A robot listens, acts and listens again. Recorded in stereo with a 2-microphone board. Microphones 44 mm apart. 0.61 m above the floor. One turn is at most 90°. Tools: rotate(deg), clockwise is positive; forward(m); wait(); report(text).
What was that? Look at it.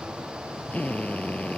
rotate(-35)
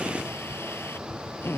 rotate(-90)
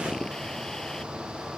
rotate(-20)
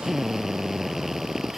report("Facing the drill.")